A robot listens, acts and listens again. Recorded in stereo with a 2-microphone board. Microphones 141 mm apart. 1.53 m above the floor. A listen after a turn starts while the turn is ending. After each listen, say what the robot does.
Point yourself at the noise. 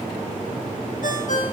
Turn 60° left.
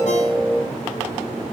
Keep listening.
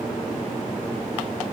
Keep listening.
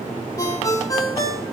Turn 25° left.
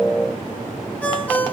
Turn 10° left.
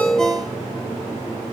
Keep listening.
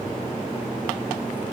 Keep listening.
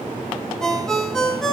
Facing the ringtone.